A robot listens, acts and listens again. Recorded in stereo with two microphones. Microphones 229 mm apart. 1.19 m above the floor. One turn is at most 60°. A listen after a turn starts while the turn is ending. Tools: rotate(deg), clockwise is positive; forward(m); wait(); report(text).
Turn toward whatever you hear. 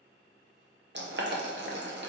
rotate(50)
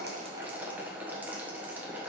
rotate(10)
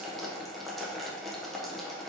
report("Facing the boiling, under 1 m away.")